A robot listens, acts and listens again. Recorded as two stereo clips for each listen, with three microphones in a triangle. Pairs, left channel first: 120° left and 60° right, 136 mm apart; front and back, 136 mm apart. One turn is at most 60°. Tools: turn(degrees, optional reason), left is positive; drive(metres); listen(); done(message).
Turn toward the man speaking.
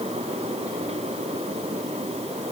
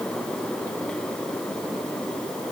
listen()
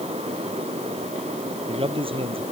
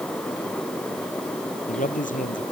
turn(degrees=-10, reason="The man speaking: 10° right.")
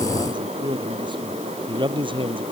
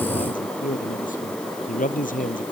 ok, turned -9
done("Facing the man speaking.")